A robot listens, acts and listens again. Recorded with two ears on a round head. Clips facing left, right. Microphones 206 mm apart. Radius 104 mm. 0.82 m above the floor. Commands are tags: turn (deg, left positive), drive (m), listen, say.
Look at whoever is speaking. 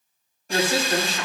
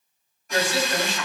<turn deg="40"/>
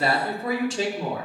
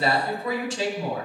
<turn deg="110"/>
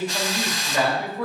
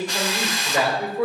<turn deg="-20"/>
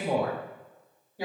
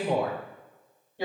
<say>Facing the woman speaking, over 4 m away.</say>